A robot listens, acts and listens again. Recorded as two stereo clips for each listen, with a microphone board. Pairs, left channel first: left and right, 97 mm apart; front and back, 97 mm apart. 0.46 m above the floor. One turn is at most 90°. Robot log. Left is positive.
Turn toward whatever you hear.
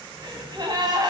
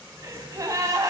note: The gasp: 130° right.
cmd yaw -90
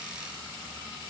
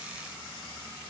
note: Nothing new. It was at 40° right.
cmd yaw -40
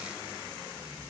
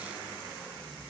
end: Facing where the gasp came from. I can't hear it now.